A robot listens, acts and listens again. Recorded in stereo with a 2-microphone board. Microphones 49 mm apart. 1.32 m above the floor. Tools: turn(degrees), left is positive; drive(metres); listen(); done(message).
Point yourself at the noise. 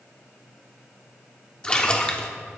turn(degrees=20)
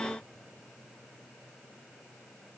listen()
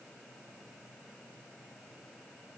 done("I heard a splash, but can't make it out now. It was about straight ahead or 140° left.")